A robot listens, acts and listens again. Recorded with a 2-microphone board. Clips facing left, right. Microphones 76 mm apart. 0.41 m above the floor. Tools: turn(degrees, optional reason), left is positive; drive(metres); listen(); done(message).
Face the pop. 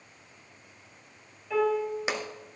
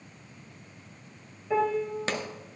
turn(degrees=30)
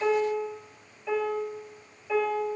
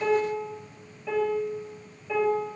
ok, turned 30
listen()
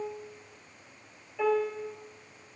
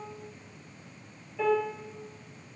done("I heard a pop, but can't make it out now. It was about 15° right or 135° left.")